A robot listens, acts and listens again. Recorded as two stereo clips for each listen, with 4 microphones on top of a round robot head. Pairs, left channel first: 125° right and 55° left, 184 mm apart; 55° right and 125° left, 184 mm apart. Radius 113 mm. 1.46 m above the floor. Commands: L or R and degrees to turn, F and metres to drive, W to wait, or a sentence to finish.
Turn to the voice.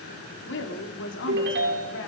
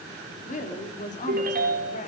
R105
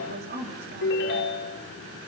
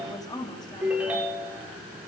L15
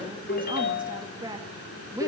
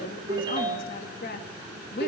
R20
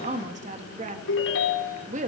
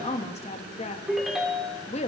Found it: a woman speaking, straight ahead, 2 to 4 m away.